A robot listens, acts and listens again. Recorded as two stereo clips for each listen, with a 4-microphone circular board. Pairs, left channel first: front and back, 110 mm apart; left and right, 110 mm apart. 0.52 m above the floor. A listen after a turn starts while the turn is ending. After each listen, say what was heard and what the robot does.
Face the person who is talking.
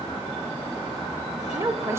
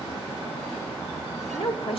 The woman speaking: 115° left. Turn 115° left.
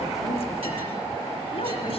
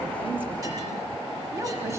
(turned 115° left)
Keep listening.
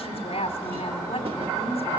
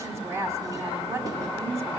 The woman speaking is now 25° right. Turn 25° right.
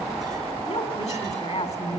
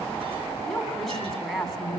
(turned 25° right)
Found it: a woman speaking, straight ahead, over 4 m away.